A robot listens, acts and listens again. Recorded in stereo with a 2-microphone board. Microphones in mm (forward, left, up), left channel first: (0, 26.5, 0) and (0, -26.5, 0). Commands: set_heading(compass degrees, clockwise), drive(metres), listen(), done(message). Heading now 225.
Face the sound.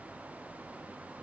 listen()
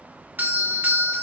set_heading(260)
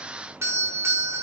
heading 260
set_heading(5)
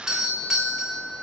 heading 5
set_heading(15)
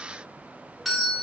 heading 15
done("Facing the doorbell, 2 to 4 m away.")